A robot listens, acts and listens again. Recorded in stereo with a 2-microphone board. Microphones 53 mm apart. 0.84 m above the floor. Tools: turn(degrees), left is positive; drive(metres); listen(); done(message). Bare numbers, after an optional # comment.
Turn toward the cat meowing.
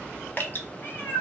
# The cat meowing: about 40° left or 140° left.
turn(40)
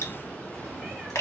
listen()
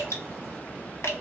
listen()
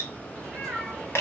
done("Found it: a cat meowing, straight ahead, 2 to 4 m away.")